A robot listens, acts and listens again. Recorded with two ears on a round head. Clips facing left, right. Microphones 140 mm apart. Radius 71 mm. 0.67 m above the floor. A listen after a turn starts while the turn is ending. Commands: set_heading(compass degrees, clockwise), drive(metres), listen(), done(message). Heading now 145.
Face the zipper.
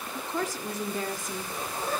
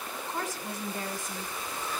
set_heading(115)
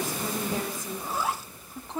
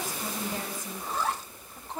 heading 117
done("Facing the zipper.")